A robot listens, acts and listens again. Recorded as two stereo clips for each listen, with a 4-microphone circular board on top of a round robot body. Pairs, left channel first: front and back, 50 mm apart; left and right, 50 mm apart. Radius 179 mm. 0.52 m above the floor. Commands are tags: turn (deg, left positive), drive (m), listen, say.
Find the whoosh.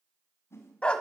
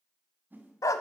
<turn deg="-35"/>
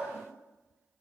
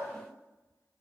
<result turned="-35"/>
<listen/>
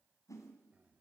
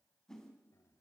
<turn deg="10"/>
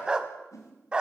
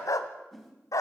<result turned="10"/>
<say>Facing the whoosh.</say>